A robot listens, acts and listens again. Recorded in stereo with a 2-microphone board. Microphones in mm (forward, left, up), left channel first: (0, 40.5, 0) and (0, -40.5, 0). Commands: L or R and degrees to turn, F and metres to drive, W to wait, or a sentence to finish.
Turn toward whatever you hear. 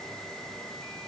W
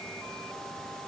W
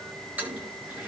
R20
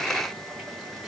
W
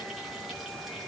W
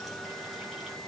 I heard a toilet flushing, but can't make it out now. It was about straight ahead or 140° right.